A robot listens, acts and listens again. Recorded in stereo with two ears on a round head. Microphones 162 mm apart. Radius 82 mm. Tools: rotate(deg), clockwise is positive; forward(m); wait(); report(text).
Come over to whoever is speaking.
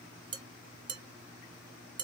wait()
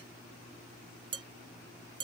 wait()
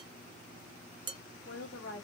rotate(-75)
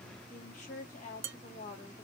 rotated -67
rotate(-40)
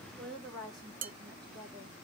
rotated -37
forward(1.0)
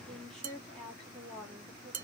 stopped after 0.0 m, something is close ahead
report("Something is in my way. I am facing the woman speaking but have not reached it.")